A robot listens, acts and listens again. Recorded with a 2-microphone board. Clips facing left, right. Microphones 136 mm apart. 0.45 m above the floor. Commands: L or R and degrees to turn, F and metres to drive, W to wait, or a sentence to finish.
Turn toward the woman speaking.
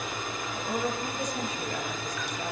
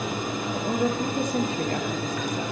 R60
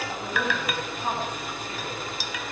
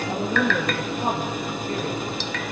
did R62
R50
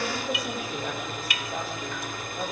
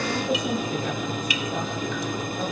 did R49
Found it: a woman speaking, straight ahead.